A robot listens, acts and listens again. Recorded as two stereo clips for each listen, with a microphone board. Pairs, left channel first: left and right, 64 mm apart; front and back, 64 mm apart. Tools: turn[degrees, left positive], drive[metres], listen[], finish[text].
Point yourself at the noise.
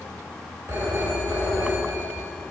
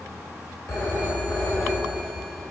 Thought: The phone ringing: 40° right.
Action: turn[-40]
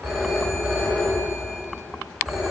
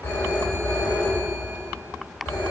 Action: finish[Facing the phone ringing.]